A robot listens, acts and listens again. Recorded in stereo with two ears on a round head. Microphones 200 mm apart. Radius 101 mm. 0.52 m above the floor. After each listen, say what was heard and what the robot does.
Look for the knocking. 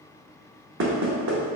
The knocking: about 50° right or 130° right. Turn 50° right.
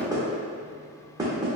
So it is at 20° right. Turn 20° right.
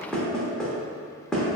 Facing the knocking, under 1 m away.